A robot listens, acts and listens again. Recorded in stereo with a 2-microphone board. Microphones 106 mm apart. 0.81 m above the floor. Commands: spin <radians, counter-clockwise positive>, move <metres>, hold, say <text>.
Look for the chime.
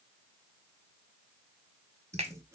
hold
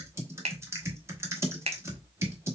hold
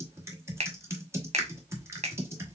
say I can't make out a chime, only typing on a keyboard and a finger snap.